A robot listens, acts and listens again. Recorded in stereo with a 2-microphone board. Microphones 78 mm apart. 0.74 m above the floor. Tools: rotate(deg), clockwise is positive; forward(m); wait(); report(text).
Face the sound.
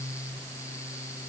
wait()
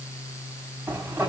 rotate(25)
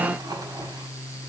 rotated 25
wait()
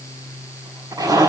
rotate(130)
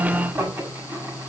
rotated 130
rotate(20)
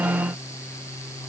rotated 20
wait()
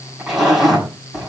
report("Found it: a zipper, straight ahead, over 4 m away.")